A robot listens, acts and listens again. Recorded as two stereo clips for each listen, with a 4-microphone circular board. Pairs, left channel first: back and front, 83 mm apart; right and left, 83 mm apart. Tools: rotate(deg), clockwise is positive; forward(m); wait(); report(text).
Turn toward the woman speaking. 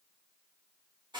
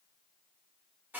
wait()
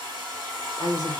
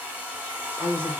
rotate(160)
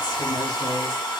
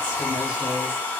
wait()
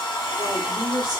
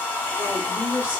rotate(-25)
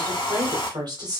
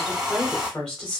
rotate(10)
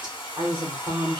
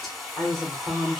report("Facing the woman speaking.")